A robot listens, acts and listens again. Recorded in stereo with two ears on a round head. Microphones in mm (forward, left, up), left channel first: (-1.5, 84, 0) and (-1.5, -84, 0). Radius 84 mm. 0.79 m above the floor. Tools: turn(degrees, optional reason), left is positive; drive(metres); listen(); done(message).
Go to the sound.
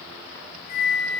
turn(degrees=35, reason="The flute: about 35° left or 145° left.")
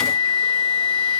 drive(metres=1.0)
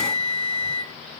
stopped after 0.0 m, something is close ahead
done("Blocked. The flute is further on, straight ahead.")